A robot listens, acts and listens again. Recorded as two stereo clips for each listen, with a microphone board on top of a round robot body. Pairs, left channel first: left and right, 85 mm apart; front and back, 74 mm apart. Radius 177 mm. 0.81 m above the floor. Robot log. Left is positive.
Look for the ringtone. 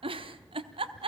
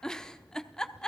cmd idle
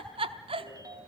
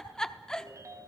note: The ringtone: 135° right.
cmd yaw -135
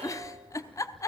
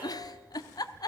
cmd idle
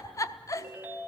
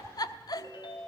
note: The ringtone is now 20° right.
cmd yaw -20
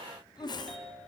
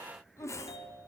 end: Found it: a ringtone, straight ahead, 2 to 4 m away.